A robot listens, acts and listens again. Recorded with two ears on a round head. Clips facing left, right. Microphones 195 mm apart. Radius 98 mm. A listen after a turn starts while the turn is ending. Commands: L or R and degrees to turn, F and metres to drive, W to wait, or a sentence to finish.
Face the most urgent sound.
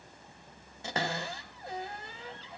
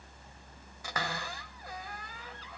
W
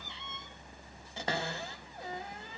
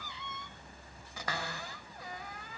W
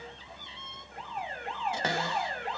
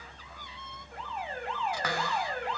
R65
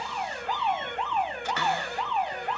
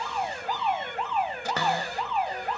Facing the alarm.